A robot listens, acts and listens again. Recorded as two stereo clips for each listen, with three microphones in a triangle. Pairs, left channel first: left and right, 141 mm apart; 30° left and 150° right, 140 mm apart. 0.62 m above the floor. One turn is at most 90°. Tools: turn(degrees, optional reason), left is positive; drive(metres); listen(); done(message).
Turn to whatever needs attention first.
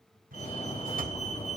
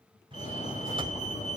turn(degrees=55, reason="The fire alarm: 55° left.")
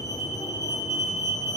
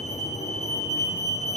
turn(degrees=30, reason="The fire alarm is now 30° left.")
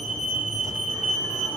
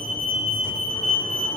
done("Facing the fire alarm.")